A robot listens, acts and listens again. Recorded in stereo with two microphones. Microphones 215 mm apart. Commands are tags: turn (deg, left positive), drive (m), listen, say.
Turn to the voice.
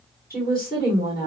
<turn deg="45"/>
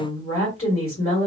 <turn deg="90"/>
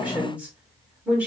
<say>Found it: a woman speaking, straight ahead.</say>